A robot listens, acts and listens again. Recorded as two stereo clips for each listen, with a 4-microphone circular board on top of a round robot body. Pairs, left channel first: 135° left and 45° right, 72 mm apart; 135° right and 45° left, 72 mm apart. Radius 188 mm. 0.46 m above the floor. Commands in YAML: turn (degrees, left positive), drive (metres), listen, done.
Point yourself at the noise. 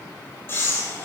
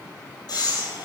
turn: -165
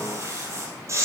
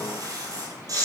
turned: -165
done: "Found it: breathing, straight ahead."